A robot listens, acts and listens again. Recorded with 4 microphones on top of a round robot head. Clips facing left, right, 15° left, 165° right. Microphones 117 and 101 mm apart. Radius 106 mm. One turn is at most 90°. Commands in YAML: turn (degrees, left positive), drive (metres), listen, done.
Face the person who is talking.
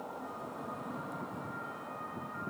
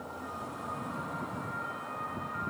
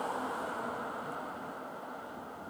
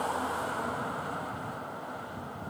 listen: true
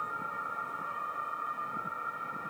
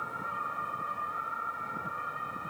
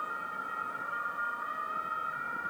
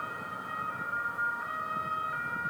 listen: true
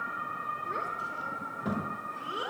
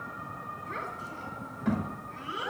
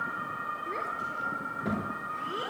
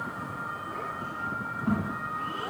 turn: 30
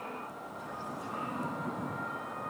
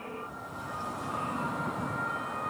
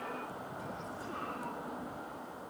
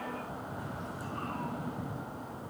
listen: true
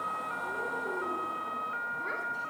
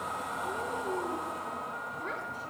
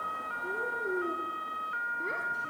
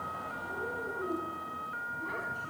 listen: true
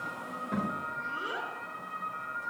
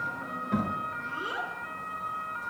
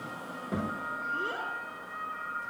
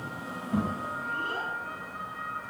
done: "Facing the child speaking."